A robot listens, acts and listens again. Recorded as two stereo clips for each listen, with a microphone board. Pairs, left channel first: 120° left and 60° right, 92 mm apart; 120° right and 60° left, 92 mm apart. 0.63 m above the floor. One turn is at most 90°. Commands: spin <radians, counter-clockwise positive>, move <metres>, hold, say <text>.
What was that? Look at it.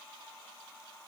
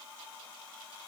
hold
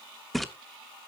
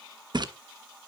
spin 0.52
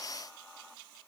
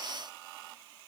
say I heard a splash from this way, but can't make it out now.